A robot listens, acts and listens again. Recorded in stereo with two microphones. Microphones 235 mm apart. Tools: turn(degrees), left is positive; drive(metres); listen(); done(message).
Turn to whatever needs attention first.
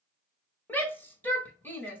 turn(degrees=30)
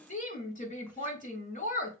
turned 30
turn(degrees=140)
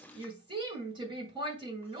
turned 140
turn(degrees=-25)
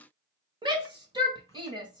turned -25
turn(degrees=-20)
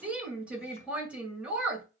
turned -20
done("Found it: a shout, straight ahead.")